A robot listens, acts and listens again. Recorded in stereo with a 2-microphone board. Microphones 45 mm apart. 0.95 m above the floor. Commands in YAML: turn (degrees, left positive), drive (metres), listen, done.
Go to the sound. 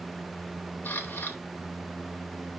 turn: 45
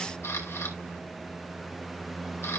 turn: 90
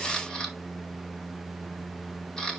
turn: 10
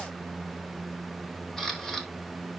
drive: 1.0
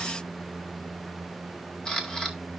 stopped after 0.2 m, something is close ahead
turn: 15
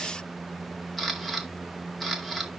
done: "Something is in my way. I am facing the camera shutter but have not reached it."